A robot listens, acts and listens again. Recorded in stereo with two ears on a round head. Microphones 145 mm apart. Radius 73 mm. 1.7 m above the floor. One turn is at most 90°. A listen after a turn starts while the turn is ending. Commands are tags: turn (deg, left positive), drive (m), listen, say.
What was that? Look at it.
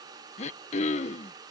<turn deg="45"/>
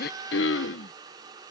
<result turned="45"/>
<turn deg="90"/>
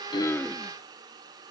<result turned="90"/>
<listen/>
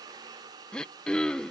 <say>Found it: throat clearing, straight ahead.</say>